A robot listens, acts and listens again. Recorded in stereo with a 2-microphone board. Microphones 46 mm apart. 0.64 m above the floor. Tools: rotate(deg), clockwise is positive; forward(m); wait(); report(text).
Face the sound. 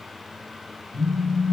rotate(60)
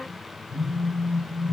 rotate(60)
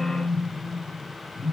rotate(10)
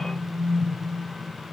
report("Found it: a phone buzzing, straight ahead.")